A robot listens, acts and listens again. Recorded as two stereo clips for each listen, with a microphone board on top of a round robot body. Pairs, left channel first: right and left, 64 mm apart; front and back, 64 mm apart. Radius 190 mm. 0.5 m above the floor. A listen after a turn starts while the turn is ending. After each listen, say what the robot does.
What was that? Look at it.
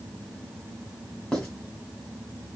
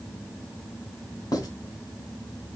Turn 10° right.
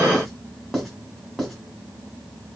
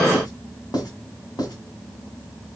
Facing the writing, 2 to 4 m away.